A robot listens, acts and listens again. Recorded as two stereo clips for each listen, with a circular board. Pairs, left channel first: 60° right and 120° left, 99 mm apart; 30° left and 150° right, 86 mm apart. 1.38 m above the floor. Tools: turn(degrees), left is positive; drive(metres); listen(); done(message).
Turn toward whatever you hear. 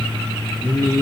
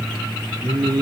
turn(degrees=-120)
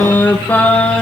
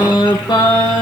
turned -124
turn(degrees=15)
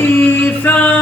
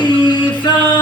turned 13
turn(degrees=10)
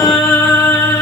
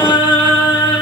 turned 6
done("Found it: singing, straight ahead.")